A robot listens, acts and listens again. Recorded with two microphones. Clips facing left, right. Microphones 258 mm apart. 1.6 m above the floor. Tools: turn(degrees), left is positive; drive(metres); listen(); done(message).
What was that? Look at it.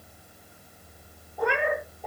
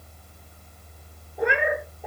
turn(degrees=-30)
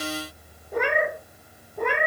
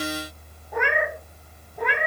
turn(degrees=55)
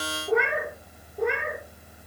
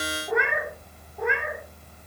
turn(degrees=40)
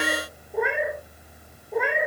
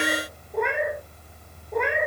done("Facing the cat meowing, 2 to 4 m away.")